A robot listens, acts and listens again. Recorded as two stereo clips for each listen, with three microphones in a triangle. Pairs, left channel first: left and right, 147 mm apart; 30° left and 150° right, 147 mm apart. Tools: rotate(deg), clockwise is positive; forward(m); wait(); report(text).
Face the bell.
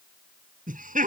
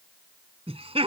wait()
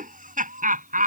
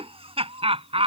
wait()
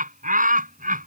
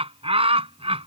report("I can't make out a bell to turn to.")